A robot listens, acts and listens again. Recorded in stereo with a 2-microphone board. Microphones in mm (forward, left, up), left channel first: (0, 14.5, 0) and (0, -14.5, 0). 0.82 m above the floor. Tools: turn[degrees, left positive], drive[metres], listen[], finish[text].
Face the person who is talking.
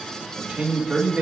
Thought: The man speaking: about 60° right or 120° right.
Action: turn[-60]
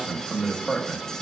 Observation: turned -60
Action: finish[Facing the man speaking.]